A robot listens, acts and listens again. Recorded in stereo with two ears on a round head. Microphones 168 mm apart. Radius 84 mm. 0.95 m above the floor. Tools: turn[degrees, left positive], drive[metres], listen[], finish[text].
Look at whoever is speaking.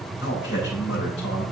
Thought: The man speaking: about 65° left or 115° left.
Action: turn[65]
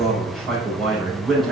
Action: finish[Facing the man speaking, over 4 m away.]